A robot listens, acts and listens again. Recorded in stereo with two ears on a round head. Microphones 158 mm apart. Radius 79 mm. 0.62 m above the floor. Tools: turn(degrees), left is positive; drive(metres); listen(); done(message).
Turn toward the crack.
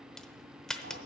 turn(degrees=30)
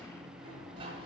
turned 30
listen()
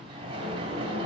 done("I heard a crack, but can't make it out now. It was about 25° right or 145° left.")